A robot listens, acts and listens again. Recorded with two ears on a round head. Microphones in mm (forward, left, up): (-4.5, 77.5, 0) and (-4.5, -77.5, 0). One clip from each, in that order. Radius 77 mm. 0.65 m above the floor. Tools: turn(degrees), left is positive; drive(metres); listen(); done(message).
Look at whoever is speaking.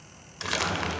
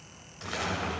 turn(degrees=45)
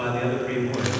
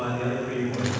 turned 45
turn(degrees=85)
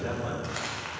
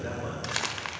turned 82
done("Found it: a man speaking, straight ahead.")